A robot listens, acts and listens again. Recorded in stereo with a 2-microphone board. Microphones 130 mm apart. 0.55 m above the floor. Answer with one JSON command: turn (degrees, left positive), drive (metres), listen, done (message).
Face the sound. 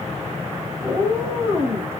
{"turn": -25}
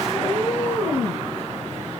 {"done": "Facing the cat meowing."}